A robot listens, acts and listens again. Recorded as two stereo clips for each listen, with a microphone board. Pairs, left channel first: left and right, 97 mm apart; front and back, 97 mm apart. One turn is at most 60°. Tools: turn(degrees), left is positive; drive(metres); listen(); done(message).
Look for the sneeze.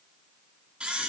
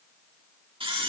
listen()
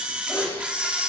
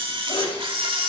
turn(degrees=30)
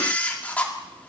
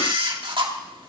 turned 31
done("I heard a sneeze from this way, but can't make it out now.")